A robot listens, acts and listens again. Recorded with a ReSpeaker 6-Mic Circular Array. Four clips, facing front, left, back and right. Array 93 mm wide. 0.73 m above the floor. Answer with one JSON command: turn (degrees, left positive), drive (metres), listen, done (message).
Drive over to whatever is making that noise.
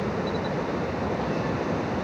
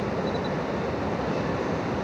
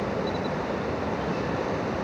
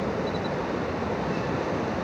{"listen": true}
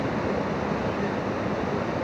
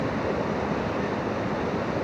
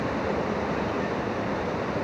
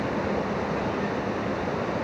{"listen": true}
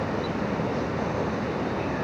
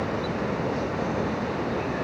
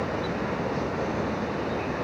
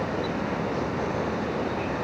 {"done": "I can't make out anything."}